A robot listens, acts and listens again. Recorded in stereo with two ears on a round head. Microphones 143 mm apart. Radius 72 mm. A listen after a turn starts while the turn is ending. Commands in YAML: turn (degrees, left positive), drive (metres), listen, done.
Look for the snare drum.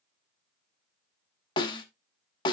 turn: 30
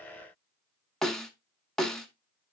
done: "Found it: a snare drum, straight ahead, under 1 m away."